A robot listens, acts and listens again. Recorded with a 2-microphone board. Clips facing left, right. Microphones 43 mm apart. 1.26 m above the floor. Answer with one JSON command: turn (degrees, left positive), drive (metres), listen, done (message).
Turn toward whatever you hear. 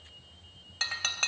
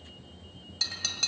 {"turn": 40}
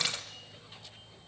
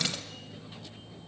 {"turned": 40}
{"listen": true}
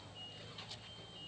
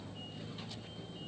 {"done": "I heard breaking glass, but can't make it out now. It was about straight ahead or 100° left."}